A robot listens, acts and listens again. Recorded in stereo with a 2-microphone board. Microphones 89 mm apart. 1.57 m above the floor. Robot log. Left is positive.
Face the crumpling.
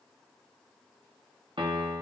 cmd idle
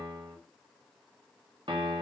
cmd idle
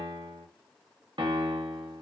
end: I can't make out crumpling to turn to.